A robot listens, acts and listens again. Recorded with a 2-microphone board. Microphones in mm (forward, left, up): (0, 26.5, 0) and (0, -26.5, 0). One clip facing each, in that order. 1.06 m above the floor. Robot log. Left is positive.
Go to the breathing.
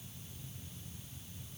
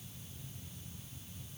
cmd idle
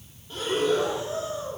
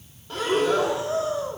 cmd yaw -90
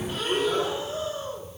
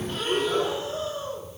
cmd fwd 1.0
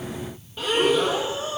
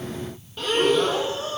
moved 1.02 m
cmd fwd 1.0
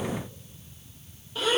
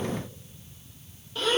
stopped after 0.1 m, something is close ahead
end: Arrived at the breathing, straight ahead.